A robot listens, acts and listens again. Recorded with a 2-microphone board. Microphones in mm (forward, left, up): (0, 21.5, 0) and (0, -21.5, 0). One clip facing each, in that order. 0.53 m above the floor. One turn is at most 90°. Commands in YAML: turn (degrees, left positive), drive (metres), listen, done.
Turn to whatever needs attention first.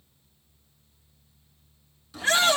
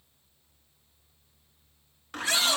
turn: 40
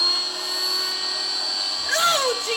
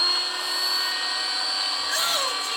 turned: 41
turn: 90
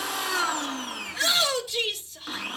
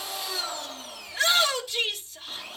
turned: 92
done: "Found it: a shout, straight ahead."